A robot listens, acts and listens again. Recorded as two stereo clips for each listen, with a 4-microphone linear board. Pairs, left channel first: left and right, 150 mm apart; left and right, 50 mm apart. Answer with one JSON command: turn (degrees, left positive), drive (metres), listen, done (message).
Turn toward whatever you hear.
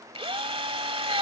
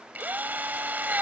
{"turn": -40}
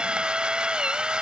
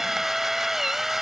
{"done": "Facing the drill."}